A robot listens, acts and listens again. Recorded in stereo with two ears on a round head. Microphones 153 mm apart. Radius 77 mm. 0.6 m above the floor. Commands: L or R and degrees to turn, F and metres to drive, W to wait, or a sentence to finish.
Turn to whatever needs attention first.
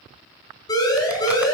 L20
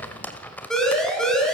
Facing the siren.